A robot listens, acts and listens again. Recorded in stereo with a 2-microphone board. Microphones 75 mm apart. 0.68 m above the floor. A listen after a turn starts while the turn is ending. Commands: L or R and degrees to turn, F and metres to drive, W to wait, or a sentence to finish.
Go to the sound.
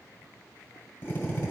L30
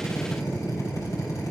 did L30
L120
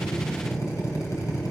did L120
L50
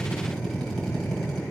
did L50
F1.0
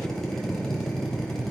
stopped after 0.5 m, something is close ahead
Something is in my way. I am facing the drill but have not reached it.